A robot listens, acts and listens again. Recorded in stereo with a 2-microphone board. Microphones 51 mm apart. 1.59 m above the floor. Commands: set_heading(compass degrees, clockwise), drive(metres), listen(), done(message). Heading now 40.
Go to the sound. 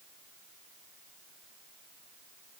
listen()
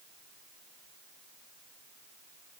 listen()
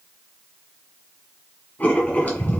set_heading(5)
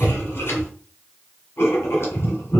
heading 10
set_heading(260)
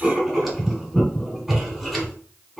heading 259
drive(1.0)
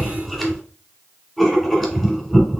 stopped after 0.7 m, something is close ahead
done("Arrived at the writing, straight ahead.")